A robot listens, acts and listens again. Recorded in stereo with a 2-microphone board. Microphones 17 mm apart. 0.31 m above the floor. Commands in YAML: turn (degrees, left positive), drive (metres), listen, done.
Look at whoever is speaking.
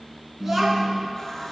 turn: -30
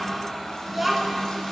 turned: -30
turn: -25
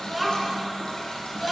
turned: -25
turn: -20
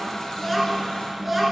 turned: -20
turn: -10
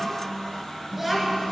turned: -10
done: "Found it: a child speaking, straight ahead."